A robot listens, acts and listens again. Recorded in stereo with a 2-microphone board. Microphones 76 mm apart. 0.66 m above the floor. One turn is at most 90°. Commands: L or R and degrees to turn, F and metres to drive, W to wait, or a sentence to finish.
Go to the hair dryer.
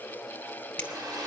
R55
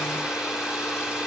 R10
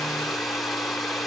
F1.0
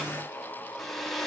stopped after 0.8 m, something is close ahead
Arrived at the hair dryer, straight ahead.